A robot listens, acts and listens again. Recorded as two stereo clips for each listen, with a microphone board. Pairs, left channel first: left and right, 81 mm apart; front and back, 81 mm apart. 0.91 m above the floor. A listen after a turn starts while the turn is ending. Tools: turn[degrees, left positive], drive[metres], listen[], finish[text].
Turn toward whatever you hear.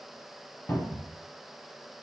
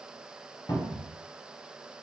Thought: The cupboard door: 35° left.
Action: turn[35]
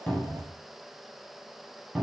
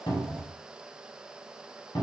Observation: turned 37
Action: finish[Found it: a cupboard door, straight ahead.]